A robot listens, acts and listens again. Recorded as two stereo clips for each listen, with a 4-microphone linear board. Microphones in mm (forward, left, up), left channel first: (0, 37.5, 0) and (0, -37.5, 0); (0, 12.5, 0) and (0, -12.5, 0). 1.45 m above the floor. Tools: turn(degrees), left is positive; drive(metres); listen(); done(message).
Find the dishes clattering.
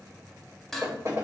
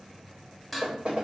turn(degrees=30)
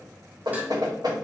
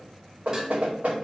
listen()
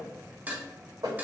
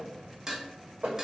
turn(degrees=-25)
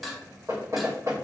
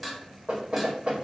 done("Facing the dishes clattering.")